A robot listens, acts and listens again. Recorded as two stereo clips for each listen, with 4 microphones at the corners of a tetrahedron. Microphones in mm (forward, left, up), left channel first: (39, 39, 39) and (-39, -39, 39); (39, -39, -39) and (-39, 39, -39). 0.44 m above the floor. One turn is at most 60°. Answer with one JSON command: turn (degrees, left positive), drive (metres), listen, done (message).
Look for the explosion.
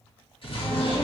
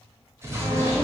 {"turn": 60}
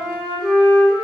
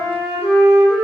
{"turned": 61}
{"turn": 15}
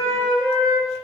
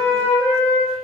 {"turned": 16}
{"done": "Facing where the explosion came from. I can't hear it now."}